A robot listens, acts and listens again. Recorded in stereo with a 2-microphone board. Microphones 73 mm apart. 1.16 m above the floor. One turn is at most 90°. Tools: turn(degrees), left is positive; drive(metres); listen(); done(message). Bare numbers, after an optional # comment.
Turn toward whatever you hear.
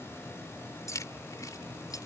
# The keys jangling: about 60° left or 120° left.
turn(60)
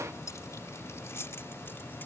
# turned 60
# So it is at 35° left.
turn(35)
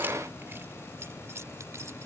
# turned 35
# The keys jangling is now 40° right.
turn(-40)
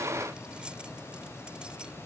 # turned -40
listen()
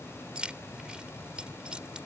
# The keys jangling is now 15° right.
turn(-15)
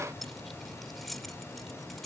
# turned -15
done("Found it: keys jangling, straight ahead.")